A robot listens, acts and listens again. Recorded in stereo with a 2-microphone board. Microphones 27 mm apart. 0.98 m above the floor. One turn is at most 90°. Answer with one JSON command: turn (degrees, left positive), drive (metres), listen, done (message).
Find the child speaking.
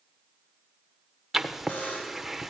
{"listen": true}
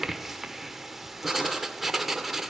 {"listen": true}
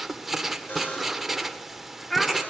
{"turn": 30}
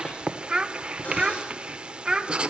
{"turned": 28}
{"turn": -25}
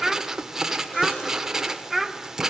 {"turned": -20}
{"done": "Found it: a child speaking, straight ahead, 1 to 2 m away."}